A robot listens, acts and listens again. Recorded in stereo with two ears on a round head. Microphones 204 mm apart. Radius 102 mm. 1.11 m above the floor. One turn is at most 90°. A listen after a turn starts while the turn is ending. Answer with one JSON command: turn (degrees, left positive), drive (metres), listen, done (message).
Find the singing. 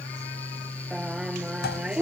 {"turn": -30}
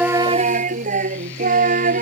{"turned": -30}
{"turn": -90}
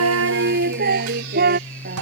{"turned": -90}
{"turn": -40}
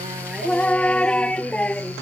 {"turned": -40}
{"done": "Facing the singing."}